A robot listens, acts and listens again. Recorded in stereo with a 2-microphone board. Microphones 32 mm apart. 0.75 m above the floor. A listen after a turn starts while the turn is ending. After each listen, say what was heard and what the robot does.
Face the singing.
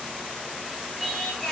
Turn 30° left.
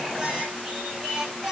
So it is at 10° right. Turn 10° right.
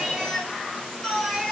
Found it: singing, straight ahead.